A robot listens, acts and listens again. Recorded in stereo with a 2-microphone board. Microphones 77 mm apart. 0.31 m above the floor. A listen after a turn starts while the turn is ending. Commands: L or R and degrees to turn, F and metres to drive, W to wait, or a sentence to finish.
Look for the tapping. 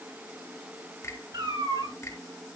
W
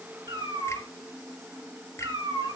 W
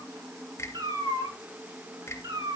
I can't make out tapping, only a finger snap and a cat meowing.